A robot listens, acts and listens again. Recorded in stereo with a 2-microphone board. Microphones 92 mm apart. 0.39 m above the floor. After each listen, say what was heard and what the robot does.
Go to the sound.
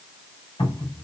The cupboard door: about 60° left or 120° left. Turn 60° left.
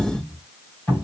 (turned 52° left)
So it is at 20° left. Turn 20° left.
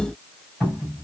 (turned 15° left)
Drive 1.0 m forward.
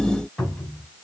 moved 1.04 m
The cupboard door is now 10° left. Turn 10° left.
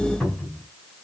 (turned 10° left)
Drive 1.0 m forward.
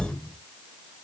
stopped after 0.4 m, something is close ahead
Arrived at the cupboard door, straight ahead.